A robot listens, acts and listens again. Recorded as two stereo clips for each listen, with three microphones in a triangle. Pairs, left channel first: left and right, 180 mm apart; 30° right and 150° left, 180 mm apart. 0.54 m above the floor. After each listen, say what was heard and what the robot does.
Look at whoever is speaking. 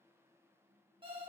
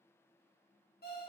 Keep listening.
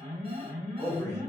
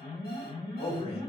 The man speaking: 15° left. Turn 15° left.
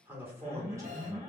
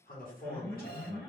The man speaking is now 15° right. Turn 15° right.
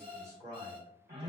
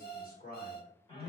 The man speaking is now 25° right. Turn 25° right.
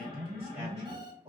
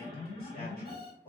The man speaking is now 45° right. Turn 45° right.
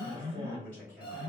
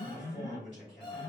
The man speaking is now 10° left. Turn 10° left.
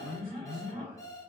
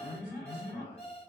Keep listening.
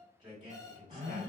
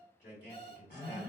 Found it: a man speaking, straight ahead, 1 to 2 m away.